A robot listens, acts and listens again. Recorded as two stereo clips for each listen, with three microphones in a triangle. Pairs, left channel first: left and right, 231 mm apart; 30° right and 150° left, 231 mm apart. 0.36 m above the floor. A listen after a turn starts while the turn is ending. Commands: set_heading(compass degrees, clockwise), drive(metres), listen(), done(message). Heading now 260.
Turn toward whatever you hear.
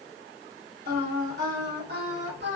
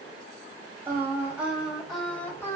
set_heading(5)
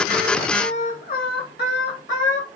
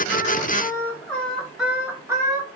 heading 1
set_heading(281)
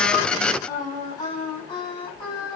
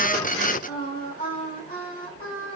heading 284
set_heading(264)
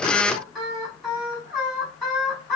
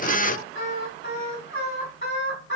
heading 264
done("Found it: singing, straight ahead, 2 to 4 m away.")